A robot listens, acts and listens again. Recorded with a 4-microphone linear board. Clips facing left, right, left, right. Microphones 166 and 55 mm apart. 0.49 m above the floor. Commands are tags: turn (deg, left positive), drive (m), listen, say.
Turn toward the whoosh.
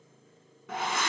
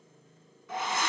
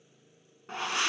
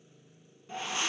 <turn deg="65"/>
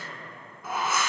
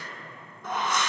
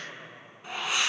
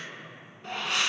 <say>Facing the whoosh.</say>